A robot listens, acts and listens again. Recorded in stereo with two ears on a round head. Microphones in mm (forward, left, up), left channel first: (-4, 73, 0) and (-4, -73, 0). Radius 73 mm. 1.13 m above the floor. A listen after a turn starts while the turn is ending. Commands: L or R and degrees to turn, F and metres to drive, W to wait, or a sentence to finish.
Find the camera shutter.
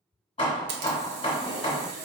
R70
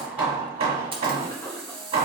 R35
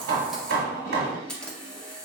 Facing the camera shutter.